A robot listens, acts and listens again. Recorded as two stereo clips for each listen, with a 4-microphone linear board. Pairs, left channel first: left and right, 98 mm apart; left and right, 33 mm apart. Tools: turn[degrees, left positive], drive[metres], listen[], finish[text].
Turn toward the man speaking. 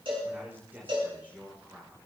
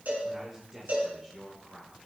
Thought: The man speaking: about 20° right or 160° right.
Action: turn[-20]
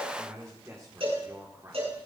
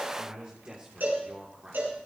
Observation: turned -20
Thought: The man speaking: about 35° right or 145° right.
Action: turn[-35]
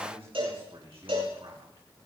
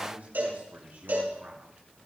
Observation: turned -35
Thought: So it is at 115° right.
Action: turn[-115]
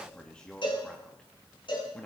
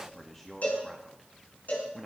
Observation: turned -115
Thought: The man speaking is now 10° left.
Action: turn[10]
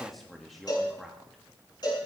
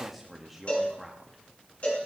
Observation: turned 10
Action: finish[Found it: a man speaking, straight ahead, 1 to 2 m away.]